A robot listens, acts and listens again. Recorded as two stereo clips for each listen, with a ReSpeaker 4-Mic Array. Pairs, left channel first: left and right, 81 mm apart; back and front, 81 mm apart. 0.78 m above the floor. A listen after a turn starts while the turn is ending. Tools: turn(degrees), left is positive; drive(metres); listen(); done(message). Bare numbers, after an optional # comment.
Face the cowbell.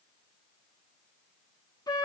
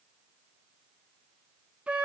listen()
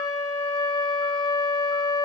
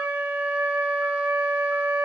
listen()
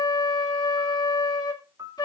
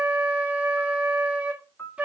done("I can't make out a cowbell, only a flute and a piano.")